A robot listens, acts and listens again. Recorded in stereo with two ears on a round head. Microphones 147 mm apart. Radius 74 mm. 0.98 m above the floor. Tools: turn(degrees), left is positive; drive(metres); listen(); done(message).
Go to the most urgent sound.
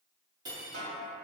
listen()
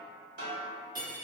listen()
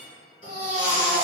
turn(degrees=30)
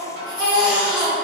turn(degrees=120)
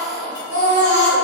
turn(degrees=25)
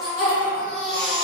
drive(metres=1.0)
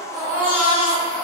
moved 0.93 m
drive(metres=1.0)
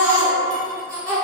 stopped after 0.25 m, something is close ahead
turn(degrees=10)
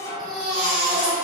done("I am next to the baby crying.")